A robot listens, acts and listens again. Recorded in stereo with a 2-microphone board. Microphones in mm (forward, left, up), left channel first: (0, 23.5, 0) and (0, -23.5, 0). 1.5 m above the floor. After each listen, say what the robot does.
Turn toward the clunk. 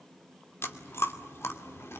Keep listening.
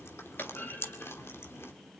Turn 45° left.
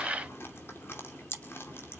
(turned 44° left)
Keep listening.
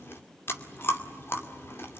I heard a clunk, but can't make it out now. It was about 5° left or 90° left.